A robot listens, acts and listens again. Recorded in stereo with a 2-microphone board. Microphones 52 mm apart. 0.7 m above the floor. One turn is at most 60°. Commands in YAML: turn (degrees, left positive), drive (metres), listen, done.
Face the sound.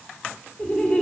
turn: 25
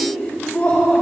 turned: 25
turn: 35
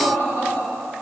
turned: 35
turn: 60
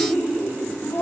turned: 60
turn: 60
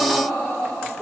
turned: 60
turn: 30
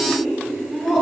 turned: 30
done: "Found it: laughter, straight ahead."